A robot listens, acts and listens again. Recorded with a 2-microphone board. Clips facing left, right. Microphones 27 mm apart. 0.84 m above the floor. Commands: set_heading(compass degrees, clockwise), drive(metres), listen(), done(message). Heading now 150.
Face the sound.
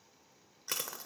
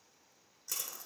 set_heading(100)
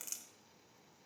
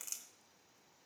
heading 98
done("Facing the crushing, 1 to 2 m away.")